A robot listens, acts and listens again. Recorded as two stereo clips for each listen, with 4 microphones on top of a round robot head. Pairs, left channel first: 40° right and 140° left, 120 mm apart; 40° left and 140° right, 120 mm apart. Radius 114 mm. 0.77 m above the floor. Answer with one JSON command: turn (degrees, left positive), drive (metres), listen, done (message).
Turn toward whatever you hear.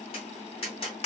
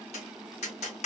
{"done": "Facing the tapping."}